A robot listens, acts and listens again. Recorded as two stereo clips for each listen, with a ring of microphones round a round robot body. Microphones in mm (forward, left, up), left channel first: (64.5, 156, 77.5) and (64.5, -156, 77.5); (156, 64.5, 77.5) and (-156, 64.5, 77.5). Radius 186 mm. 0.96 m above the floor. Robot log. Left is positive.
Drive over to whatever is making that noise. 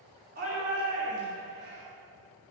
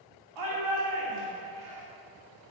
note: The shout: 155° right.
cmd yaw -155
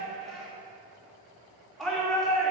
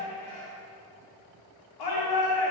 cmd fwd 1.0
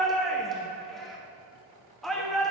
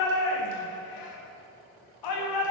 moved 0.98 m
cmd fwd 1.0
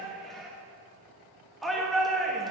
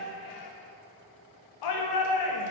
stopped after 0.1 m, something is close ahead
end: I am next to the shout.